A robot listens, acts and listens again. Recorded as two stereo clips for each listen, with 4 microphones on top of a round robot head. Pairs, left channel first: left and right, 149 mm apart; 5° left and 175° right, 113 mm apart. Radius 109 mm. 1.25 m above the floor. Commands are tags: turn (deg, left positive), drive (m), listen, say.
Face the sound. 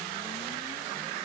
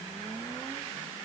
<listen/>
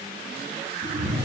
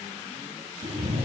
<turn deg="-130"/>
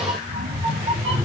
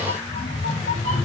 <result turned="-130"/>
<turn deg="-40"/>
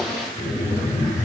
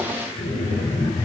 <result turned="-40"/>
<turn deg="30"/>
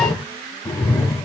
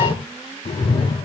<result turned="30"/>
<turn deg="30"/>
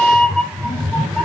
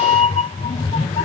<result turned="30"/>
<say>Facing the cat meowing.</say>